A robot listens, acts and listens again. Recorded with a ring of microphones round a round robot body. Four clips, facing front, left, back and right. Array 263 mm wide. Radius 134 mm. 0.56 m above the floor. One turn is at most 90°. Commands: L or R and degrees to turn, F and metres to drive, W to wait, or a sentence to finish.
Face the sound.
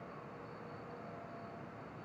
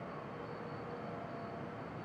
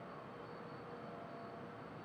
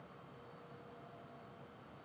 W
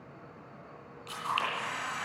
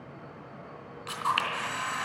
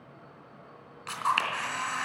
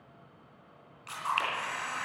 L90
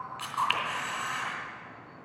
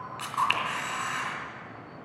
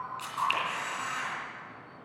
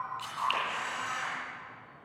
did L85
L70
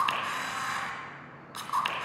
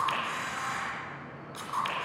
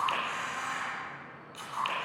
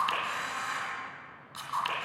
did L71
Found it: a camera shutter, straight ahead.